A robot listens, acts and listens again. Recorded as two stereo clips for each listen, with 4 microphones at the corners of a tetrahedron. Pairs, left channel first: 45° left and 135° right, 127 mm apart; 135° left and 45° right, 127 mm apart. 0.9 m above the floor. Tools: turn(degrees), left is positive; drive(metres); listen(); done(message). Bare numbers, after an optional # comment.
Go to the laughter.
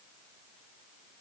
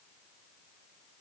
listen()
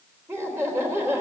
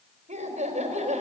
# The laughter: 65° right.
turn(-65)
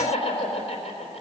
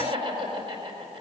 drive(1.0)
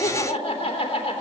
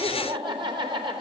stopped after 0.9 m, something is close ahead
done("Blocked. The laughter is further on, straight ahead.")